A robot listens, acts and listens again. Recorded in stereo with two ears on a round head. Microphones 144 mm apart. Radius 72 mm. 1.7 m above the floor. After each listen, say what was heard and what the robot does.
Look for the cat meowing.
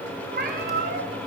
The cat meowing: about 55° right or 125° right. Turn 55° right.
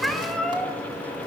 Facing the cat meowing, 2 to 4 m away.